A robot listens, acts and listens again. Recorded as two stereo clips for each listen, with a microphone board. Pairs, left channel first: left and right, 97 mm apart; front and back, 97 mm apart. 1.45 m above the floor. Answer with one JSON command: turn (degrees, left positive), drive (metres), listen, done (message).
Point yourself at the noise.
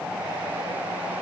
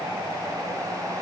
{"listen": true}
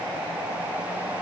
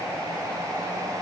{"listen": true}
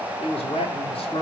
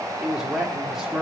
{"turn": 95}
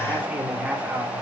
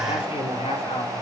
{"turn": -10}
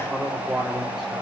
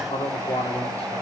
{"done": "Facing the man speaking, 2 to 4 m away."}